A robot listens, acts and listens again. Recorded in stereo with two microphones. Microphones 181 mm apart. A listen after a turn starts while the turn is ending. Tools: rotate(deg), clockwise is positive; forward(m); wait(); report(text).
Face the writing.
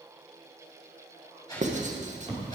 rotate(40)
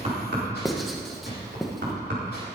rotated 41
report("Found it: writing, straight ahead, 1 to 2 m away.")